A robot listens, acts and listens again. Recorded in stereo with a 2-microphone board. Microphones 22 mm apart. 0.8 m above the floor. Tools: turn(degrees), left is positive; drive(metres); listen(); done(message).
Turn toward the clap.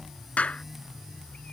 turn(degrees=90)
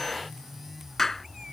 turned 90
turn(degrees=10)
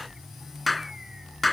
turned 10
done("Found it: a clap, straight ahead.")